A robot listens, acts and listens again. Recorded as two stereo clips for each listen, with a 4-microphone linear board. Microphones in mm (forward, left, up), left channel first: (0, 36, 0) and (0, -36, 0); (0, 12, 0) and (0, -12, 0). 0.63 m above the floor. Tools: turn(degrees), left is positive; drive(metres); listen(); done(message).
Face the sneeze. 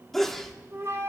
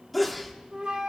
turn(degrees=30)
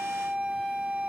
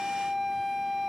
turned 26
listen()
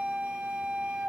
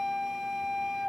done("I heard a sneeze, but can't make it out now. It was about 20° right or 150° left.")